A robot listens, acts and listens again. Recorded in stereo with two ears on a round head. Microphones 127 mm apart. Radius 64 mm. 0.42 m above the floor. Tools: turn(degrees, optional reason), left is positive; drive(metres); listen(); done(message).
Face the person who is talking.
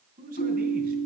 turn(degrees=-60, reason="The man speaking: about 60° right or 120° right.")
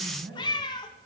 done("Facing the man speaking, 2 to 4 m away.")